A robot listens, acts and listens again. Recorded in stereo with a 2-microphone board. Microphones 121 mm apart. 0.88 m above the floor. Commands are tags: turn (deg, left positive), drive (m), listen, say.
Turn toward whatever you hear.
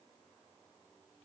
<listen/>
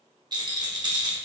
<turn deg="-35"/>
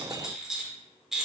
<say>Found it: a rattle, straight ahead.</say>